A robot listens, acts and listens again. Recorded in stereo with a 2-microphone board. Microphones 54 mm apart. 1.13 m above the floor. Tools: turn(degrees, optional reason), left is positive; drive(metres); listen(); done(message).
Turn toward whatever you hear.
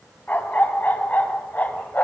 turn(degrees=35, reason="The dog barking: about 35° left or 145° left.")
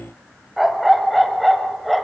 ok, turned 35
done("Found it: a dog barking, straight ahead, 2 to 4 m away.")